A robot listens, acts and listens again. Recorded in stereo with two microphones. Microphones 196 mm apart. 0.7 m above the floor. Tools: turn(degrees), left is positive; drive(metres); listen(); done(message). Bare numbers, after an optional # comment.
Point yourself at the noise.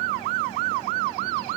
listen()
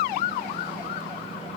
listen()
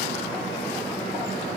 done("I can't make out anything.")